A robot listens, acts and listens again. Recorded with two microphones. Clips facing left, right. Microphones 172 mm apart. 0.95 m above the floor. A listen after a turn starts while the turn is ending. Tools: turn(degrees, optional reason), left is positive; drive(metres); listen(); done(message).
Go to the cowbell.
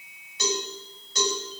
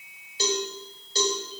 turn(degrees=-30, reason="The cowbell: about 30° right or 150° right.")
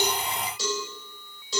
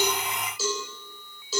drive(metres=1.0)
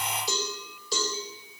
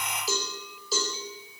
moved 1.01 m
drive(metres=1.0)
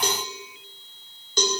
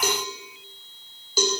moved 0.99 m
drive(metres=1.0)
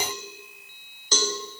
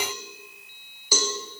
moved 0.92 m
turn(degrees=-10, reason="The cowbell is now 10° right.")
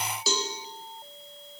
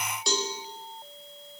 drive(metres=1.0)
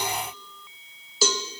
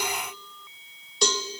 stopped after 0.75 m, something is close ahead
done("I am next to the cowbell.")